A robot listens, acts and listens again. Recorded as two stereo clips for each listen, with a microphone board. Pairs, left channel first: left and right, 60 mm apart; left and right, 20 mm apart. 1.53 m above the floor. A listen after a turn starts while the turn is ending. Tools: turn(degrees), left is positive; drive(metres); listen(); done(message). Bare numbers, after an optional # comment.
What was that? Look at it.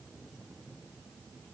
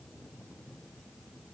listen()
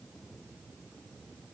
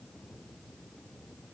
listen()
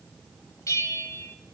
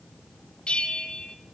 # The bell: about 70° left or 110° left.
turn(70)
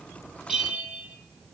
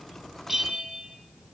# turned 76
done("Found it: a bell, straight ahead, 1 to 2 m away.")